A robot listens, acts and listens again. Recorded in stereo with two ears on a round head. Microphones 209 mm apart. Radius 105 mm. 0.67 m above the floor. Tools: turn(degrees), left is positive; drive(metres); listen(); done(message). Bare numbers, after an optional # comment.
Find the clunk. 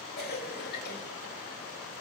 listen()
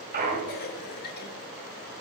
# The clunk: about 40° right or 140° right.
turn(-40)
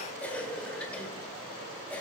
listen()
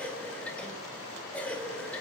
done("I heard a clunk, but can't make it out now. It was about straight ahead or 100° right.")